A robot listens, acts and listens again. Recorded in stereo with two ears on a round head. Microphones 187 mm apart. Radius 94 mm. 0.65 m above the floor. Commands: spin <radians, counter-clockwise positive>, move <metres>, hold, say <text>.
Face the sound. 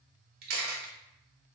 spin -0.87
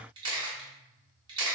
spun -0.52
spin -0.44
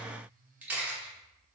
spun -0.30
spin -0.17
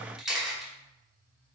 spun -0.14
say Found it: a camera shutter, straight ahead, 1 to 2 m away.